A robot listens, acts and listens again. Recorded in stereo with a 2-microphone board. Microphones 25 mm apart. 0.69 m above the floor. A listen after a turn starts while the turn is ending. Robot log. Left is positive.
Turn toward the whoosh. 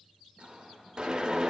note: The whoosh: about 35° right or 145° right.
cmd yaw -35
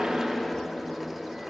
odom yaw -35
note: So it is at 10° right.
cmd yaw -10
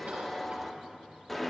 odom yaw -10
end: Facing the whoosh.